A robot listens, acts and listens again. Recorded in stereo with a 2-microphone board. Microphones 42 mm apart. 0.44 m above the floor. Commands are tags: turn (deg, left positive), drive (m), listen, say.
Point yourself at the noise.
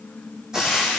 <turn deg="-20"/>
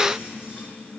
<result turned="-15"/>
<listen/>
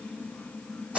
<turn deg="-145"/>
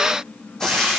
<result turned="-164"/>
<turn deg="15"/>
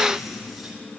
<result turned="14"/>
<listen/>
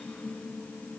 <listen/>
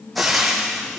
<say>Found it: frying, straight ahead, 2 to 4 m away.</say>